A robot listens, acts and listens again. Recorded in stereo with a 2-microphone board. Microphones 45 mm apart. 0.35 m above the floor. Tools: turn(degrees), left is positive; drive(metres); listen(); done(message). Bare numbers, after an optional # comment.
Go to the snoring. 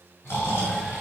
# The snoring: about 65° left or 115° left.
turn(65)
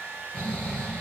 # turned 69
# So it is at 40° left.
turn(40)
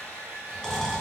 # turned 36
drive(1.0)
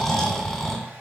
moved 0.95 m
drive(1.0)
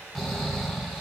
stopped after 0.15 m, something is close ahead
done("I am next to the snoring.")